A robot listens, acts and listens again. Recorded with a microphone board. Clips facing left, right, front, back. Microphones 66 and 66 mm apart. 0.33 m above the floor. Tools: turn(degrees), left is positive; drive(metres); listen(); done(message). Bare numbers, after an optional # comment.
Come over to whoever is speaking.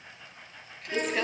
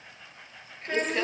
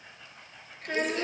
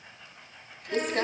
# The child speaking: 35° right.
turn(-35)
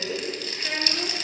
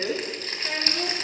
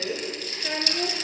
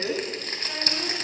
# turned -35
# The child speaking is now 10° left.
turn(10)
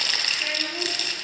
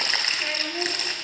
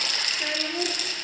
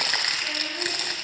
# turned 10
drive(1.0)
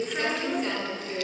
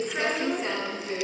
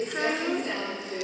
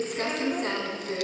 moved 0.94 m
listen()
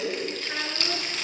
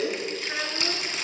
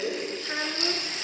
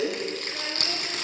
listen()
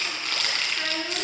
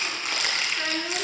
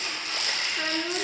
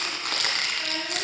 drive(1.0)
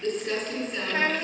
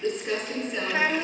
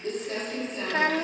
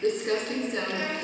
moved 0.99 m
# The child speaking is now 10° right.
turn(-10)
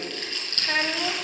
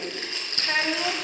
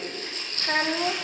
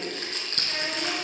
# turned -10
drive(1.0)
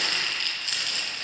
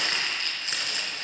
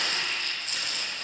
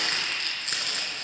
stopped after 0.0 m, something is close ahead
listen()
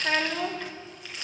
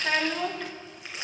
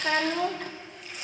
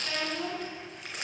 done("I am next to the child speaking.")